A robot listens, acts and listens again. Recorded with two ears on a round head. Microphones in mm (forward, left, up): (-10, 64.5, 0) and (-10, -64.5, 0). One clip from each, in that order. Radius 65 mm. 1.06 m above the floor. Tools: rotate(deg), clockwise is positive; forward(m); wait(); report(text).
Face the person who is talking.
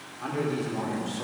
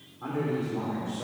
rotate(-70)
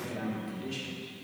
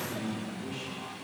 rotate(-40)
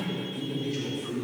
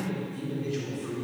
report("Facing the man speaking, 2 to 4 m away.")